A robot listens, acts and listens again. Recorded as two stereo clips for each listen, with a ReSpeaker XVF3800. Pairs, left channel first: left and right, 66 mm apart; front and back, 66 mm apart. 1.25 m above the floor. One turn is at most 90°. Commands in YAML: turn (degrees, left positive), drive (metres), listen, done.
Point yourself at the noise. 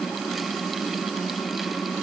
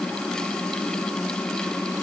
listen: true
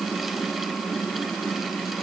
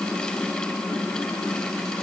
listen: true
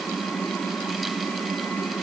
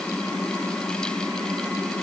done: "I can't make out anything to turn to."